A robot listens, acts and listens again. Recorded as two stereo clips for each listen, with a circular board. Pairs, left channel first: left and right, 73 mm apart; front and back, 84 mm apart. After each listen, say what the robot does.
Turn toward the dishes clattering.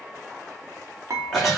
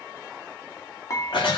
Turn 50° right.
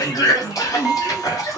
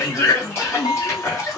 Found it: dishes clattering, straight ahead, 1 to 2 m away.